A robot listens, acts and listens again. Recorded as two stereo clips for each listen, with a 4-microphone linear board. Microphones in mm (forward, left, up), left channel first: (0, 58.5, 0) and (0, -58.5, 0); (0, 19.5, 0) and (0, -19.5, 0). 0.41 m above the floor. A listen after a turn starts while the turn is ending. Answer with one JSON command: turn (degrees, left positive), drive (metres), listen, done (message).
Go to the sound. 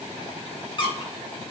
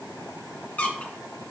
{"turn": 45}
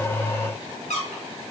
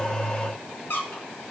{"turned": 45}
{"turn": 90}
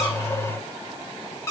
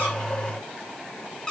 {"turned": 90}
{"turn": 25}
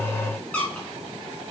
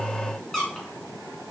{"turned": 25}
{"turn": 10}
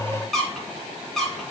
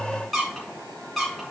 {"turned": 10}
{"drive": 1.0}
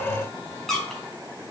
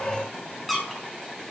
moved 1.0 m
{"drive": 1.0}
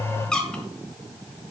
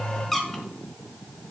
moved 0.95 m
{"turn": 10}
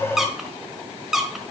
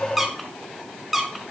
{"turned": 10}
{"drive": 1.0}
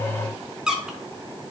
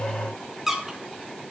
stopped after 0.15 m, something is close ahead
{"turn": -10}
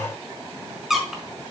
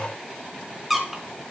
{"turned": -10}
{"done": "I am next to the squeak."}